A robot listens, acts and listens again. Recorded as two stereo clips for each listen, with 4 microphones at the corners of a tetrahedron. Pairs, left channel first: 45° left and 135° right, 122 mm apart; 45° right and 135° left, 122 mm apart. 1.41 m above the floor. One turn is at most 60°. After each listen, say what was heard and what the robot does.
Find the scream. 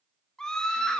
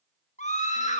The scream: 40° right. Turn 40° right.
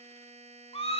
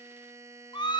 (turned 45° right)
Facing the scream.